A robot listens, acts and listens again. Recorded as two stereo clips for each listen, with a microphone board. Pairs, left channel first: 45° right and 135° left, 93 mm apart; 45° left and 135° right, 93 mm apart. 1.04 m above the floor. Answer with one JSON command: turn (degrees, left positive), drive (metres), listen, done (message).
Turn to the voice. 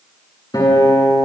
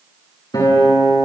{"listen": true}
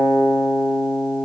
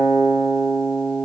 {"listen": true}
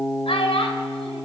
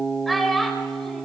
{"turn": -40}
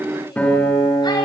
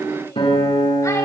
{"listen": true}
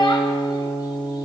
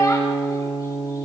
{"turn": -10}
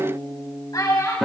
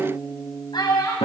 {"done": "Found it: a child speaking, straight ahead, over 4 m away."}